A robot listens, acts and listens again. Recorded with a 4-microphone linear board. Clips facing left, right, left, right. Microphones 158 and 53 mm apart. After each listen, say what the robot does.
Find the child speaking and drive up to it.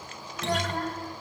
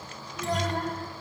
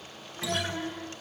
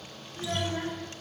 Turn 30° left.
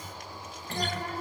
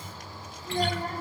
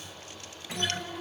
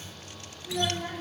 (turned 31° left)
Turn 30° right.
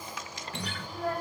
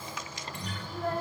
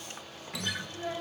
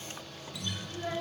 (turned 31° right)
Drive 1.0 m forward.
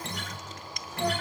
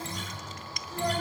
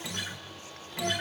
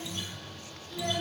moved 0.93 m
Drive 1.0 m forward.
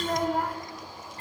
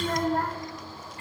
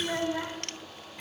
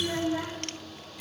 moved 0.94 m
Turn 15° left.
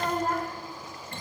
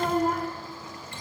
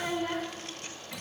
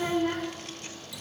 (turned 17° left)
Drive 1.0 m forward.
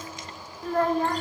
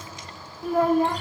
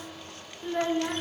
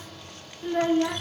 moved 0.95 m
Turn 10° right.
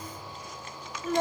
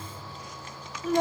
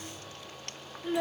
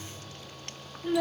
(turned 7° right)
Drive 1.0 m forward.
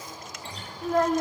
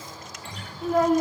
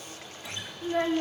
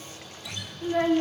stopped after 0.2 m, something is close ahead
Arrived at the child speaking, straight ahead.